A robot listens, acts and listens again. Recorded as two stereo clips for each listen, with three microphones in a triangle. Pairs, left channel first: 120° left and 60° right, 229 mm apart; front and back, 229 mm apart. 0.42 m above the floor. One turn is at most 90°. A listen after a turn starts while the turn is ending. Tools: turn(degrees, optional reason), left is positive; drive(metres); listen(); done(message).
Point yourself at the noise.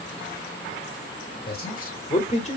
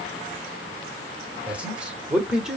turn(degrees=90, reason="The man speaking: 95° left.")
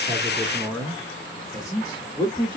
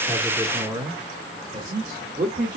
turn(degrees=90, reason="The man speaking is now straight behind.")
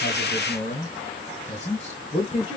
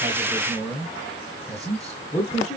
turn(degrees=70, reason="The man speaking is now 70° left.")
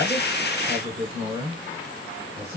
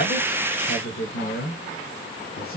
done("Facing the man speaking.")